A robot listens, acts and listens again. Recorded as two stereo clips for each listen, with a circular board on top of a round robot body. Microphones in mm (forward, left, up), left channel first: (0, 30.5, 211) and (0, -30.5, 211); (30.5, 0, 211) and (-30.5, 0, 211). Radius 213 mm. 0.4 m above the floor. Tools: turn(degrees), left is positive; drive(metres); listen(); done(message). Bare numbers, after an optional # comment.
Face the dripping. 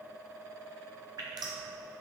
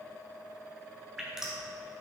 # The dripping: 95° right.
turn(-95)
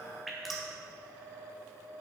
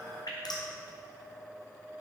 done("Facing the dripping, 2 to 4 m away.")